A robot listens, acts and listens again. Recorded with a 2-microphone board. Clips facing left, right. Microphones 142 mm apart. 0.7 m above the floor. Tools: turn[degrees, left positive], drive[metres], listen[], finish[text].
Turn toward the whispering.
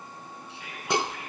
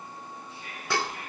Thought: The whispering: about 70° left or 110° left.
Action: turn[70]
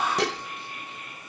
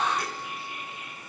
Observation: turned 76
Action: finish[Facing the whispering.]